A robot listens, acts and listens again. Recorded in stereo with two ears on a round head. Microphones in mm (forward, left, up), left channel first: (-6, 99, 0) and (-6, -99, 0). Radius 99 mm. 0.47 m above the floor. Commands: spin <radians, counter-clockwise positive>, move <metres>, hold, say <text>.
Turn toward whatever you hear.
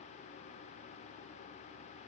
hold
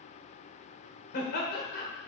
spin 0.79
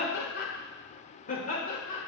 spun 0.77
spin 0.52
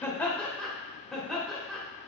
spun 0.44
say Found it: laughter, straight ahead.